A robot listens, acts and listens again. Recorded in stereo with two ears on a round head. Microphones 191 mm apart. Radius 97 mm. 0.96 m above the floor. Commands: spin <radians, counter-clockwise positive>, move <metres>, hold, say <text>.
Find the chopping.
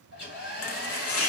spin 1.22
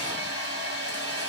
hold
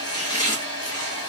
spin 0.35
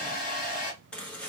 say Facing the chopping, under 1 m away.